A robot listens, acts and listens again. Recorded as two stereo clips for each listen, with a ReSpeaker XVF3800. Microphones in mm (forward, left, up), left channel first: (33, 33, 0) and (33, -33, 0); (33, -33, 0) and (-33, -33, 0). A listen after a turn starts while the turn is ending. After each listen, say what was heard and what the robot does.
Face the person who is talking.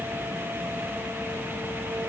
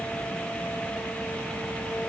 Keep listening.
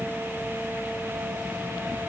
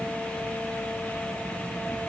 Keep listening.
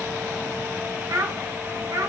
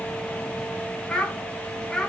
The child speaking: 80° right. Turn 80° right.
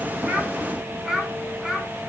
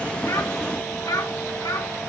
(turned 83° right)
The child speaking is now 10° right. Turn 10° right.
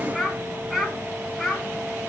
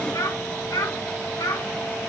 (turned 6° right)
Found it: a child speaking, straight ahead, 2 to 4 m away.